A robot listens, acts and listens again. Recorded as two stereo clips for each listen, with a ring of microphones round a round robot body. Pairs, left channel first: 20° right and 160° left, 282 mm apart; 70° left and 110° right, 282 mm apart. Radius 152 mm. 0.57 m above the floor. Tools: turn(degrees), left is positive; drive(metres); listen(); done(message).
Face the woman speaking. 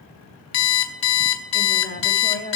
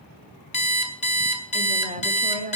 turn(degrees=-70)
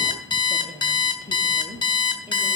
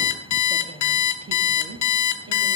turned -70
turn(degrees=-95)
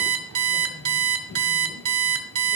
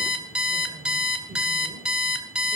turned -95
listen()
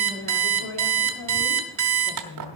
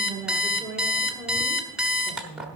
turn(degrees=-30)
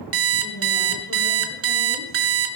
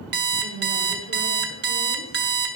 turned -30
done("Facing the woman speaking.")